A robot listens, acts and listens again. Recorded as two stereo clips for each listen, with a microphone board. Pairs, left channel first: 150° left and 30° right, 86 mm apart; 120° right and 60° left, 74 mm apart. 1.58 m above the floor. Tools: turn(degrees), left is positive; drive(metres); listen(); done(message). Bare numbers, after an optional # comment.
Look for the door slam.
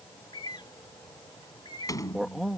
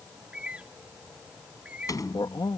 # The door slam: 160° right.
turn(-160)
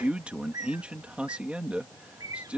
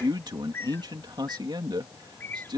done("Facing where the door slam came from. I can't hear it now.")